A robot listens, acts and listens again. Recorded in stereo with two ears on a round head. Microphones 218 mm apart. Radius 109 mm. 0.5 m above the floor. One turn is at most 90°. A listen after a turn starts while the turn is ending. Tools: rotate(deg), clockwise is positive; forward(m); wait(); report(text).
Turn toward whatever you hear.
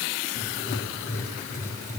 rotate(-30)
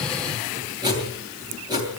rotate(20)
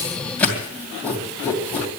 report("Facing the writing, 2 to 4 m away.")